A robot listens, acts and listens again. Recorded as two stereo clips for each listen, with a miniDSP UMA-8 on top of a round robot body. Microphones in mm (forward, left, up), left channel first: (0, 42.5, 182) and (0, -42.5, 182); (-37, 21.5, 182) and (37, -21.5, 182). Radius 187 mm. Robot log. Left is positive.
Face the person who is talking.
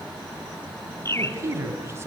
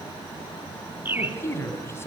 note: The man speaking: 150° right.
cmd yaw -150
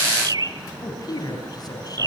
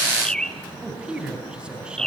note: The man speaking is now 50° left.
cmd yaw +50
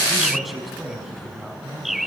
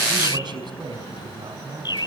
end: Found it: a man speaking, straight ahead, over 4 m away.